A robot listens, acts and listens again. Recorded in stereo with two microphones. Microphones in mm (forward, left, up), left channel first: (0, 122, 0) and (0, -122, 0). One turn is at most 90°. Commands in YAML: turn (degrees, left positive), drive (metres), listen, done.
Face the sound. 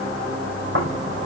turn: -55
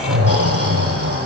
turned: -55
turn: -70
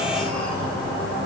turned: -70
done: "Found it: snoring, straight ahead, over 4 m away."